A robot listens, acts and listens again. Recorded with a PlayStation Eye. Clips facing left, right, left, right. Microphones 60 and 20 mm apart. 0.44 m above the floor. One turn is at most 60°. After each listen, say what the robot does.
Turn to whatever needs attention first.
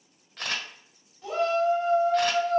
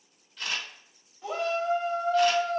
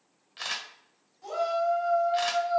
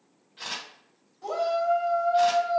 Turn 15° right.
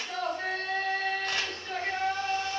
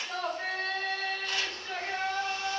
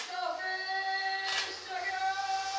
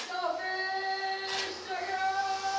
Facing the shout, 2 to 4 m away.